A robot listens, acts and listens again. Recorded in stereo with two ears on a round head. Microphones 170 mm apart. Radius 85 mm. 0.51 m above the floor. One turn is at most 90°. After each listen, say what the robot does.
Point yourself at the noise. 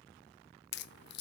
Turn 60° left.
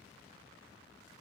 Keep listening.
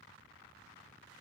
I heard a crack, but can't make it out now. It was about straight ahead or 60° left.